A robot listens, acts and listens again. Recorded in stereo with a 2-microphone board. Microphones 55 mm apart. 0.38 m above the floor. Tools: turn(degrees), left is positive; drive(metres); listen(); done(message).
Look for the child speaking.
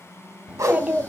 turn(degrees=-25)
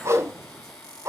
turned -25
listen()
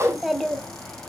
done("Found it: a child speaking, straight ahead.")